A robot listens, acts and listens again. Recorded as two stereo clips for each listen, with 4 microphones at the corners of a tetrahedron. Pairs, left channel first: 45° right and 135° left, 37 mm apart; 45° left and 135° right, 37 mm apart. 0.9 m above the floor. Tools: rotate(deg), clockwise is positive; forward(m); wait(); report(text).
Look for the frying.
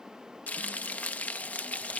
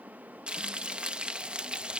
rotate(80)
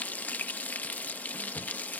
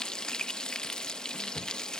rotate(20)
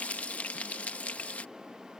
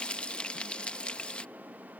report("Facing the frying.")